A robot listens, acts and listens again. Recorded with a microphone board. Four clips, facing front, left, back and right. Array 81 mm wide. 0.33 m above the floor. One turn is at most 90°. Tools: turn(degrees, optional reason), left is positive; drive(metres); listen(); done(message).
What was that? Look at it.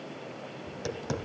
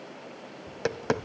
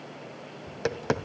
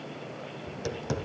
turn(degrees=90, reason="The tapping: 135° left.")
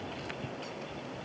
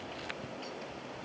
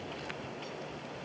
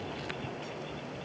turn(degrees=35, reason="The tapping is now 35° left.")
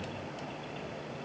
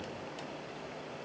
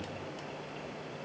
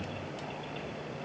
listen()
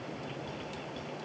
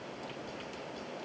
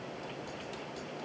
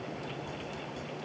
done("Facing the tapping.")